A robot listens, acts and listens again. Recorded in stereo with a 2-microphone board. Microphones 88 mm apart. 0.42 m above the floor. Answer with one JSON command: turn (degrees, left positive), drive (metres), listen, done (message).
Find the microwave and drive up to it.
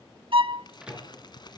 {"turn": -30}
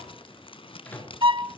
{"turn": 20}
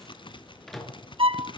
{"drive": 1.0}
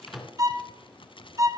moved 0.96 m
{"drive": 1.0}
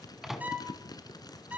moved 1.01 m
{"drive": 1.0}
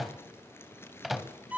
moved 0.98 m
{"drive": 1.0}
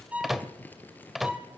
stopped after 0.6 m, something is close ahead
{"done": "I am next to the microwave."}